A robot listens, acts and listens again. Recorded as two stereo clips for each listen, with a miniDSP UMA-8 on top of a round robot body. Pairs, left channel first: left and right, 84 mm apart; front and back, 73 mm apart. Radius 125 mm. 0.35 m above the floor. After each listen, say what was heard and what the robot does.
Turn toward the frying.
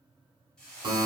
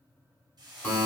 The frying: 170° left. Turn 170° left.
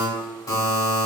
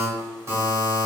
Keep listening.
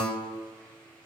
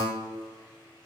Keep listening.
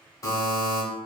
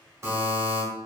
Facing where the frying came from. I can't hear it now.